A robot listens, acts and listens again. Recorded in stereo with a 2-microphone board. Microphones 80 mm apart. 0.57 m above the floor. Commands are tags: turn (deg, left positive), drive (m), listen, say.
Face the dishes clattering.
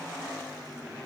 <listen/>
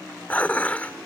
<turn deg="20"/>
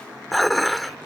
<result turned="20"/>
<say>Found it: dishes clattering, straight ahead.</say>